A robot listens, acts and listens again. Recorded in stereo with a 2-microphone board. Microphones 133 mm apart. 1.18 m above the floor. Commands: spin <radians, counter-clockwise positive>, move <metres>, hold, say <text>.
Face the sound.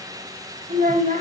spin -1.57
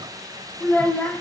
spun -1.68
spin 0.17
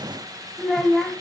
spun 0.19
say Facing the child speaking.